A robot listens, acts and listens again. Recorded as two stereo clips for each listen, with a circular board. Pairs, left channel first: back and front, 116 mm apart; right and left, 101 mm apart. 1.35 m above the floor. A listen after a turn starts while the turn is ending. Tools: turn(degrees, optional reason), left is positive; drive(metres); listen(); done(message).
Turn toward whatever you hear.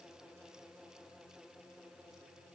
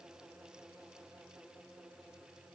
listen()
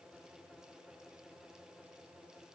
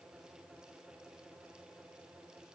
listen()
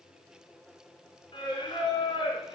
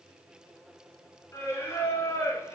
turn(degrees=-150, reason="The singing: 150° right.")
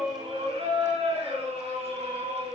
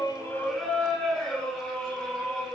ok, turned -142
turn(degrees=-10, reason="The singing is now 10° right.")
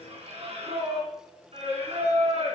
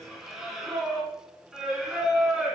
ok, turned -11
done("Facing the singing, 2 to 4 m away.")